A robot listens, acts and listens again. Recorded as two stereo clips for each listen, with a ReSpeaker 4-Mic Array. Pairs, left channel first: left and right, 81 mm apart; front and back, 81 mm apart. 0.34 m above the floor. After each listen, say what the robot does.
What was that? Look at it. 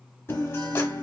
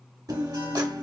Turn 145° left.
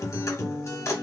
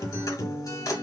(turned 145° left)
Turn 40° left.
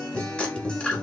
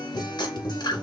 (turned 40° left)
Turn 15° left.
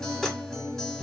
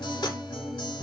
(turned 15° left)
Facing the guitar.